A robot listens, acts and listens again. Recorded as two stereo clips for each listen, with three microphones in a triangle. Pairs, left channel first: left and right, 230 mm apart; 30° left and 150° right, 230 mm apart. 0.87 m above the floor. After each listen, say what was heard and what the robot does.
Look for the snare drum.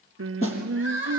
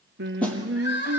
The snare drum: 115° left. Turn 115° left.
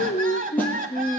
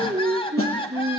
Keep listening.
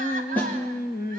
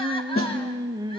Found it: a snare drum, straight ahead, over 4 m away.